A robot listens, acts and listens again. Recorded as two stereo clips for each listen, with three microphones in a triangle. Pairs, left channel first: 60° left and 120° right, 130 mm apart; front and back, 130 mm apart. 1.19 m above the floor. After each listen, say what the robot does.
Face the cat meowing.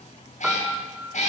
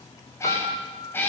Turn 75° left.
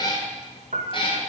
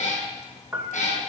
Turn 15° left.
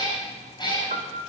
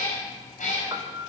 Turn 10° left.
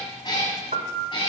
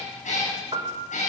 Turn 10° left.
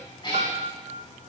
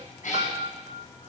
Found it: a cat meowing, straight ahead.